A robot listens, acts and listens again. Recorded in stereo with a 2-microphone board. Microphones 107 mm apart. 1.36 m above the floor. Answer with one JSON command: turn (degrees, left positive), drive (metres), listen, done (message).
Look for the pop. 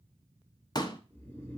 {"turn": 40}
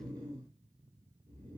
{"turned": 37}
{"listen": true}
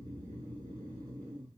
{"done": "I heard a pop, but can't make it out now. It was about straight ahead or 105° left."}